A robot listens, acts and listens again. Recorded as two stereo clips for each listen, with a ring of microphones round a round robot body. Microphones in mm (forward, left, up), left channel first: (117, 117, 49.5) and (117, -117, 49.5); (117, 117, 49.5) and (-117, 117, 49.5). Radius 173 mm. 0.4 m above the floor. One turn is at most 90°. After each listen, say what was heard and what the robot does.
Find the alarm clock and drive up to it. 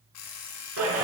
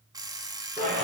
The alarm clock: 105° left. Turn 90° left.
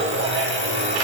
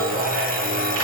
Nothing new. It was at 15° left. Turn 15° left.
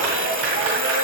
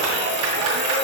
Keep listening.
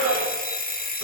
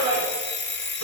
The alarm clock is now 40° left. Turn 40° left.
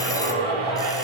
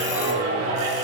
Keep listening.
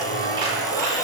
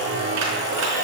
Keep listening.
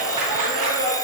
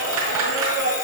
Facing where the alarm clock came from. I can't hear it now. I did not reach it.